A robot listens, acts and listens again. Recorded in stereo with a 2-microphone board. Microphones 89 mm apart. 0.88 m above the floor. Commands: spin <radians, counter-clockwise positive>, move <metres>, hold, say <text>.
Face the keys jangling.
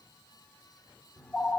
hold
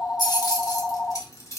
spin 0.70
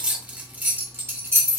spin -0.52
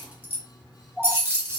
spin -0.52
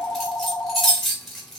say Facing the keys jangling.